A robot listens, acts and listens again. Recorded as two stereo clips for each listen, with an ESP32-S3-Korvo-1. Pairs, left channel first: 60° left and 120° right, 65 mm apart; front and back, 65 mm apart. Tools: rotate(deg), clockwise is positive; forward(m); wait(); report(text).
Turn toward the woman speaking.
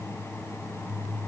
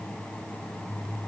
wait()
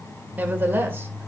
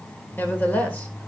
rotate(65)
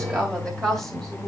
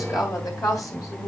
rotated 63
rotate(25)
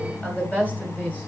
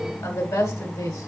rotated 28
rotate(10)
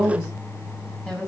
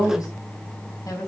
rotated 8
report("Found it: a woman speaking, straight ahead, 2 to 4 m away.")